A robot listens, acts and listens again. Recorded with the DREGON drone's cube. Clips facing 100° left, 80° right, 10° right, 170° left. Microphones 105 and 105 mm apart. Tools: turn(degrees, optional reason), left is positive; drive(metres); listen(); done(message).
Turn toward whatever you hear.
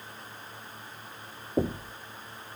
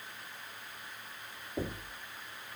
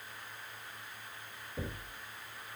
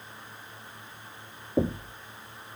turn(degrees=155, reason="The knocking: 155° left.")
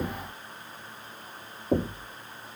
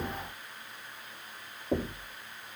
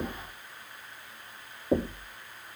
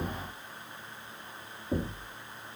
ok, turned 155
turn(degrees=25, reason="The knocking is now 25° left.")
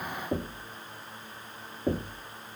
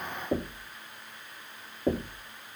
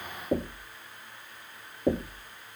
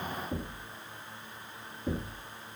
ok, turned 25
done("Found it: knocking, straight ahead.")